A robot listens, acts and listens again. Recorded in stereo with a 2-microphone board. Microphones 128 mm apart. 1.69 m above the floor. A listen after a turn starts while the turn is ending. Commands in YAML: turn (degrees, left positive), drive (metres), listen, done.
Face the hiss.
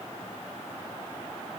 listen: true
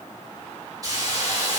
turn: -30
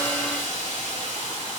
turn: -125
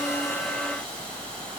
turn: 10
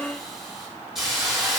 done: "Found it: a hiss, straight ahead, over 4 m away."